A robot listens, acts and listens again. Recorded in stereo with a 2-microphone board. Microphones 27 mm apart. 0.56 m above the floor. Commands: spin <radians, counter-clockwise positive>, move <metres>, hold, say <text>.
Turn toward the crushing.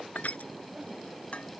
spin 1.22
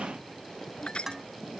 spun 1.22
spin 0.61
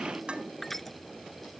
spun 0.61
say Facing the crushing.